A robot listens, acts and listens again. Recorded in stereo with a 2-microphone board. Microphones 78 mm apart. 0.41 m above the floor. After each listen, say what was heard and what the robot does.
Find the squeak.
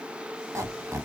The squeak: about 40° right or 140° right. Turn 40° right.
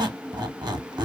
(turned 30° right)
So it is at 110° right. Turn 110° right.
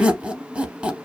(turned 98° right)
The squeak is now 15° right. Turn 15° right.
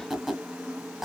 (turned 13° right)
Facing the squeak.